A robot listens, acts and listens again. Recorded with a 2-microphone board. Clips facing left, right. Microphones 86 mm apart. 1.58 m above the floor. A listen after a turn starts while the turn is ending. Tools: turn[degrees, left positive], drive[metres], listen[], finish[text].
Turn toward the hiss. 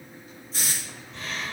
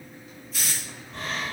Thought: The hiss: about 30° left or 150° left.
Action: turn[30]
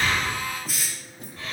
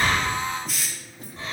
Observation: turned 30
Action: finish[Found it: a hiss, straight ahead.]